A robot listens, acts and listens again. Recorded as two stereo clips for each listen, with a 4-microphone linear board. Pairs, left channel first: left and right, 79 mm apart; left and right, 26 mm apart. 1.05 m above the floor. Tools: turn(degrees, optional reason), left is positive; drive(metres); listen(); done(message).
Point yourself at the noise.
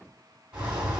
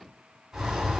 turn(degrees=-30)
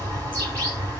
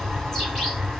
turn(degrees=20, reason="So it is at 20° left.")
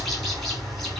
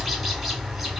done("Found it: a bird, straight ahead, 1 to 2 m away.")